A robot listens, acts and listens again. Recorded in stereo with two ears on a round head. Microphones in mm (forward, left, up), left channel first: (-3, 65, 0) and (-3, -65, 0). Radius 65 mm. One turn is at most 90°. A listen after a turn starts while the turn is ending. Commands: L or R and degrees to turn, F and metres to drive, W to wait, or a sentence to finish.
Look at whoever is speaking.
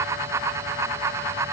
W
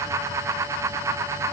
W
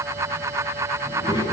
L30
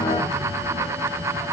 W
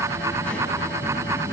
L15
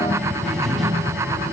Found it: a child speaking, straight ahead, over 4 m away.